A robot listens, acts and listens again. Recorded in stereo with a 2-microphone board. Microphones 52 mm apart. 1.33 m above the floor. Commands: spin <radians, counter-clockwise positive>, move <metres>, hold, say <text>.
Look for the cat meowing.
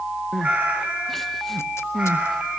spin -0.44
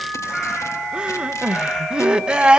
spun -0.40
hold
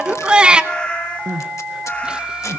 spin 0.44
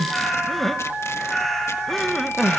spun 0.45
say Facing the cat meowing, over 4 m away.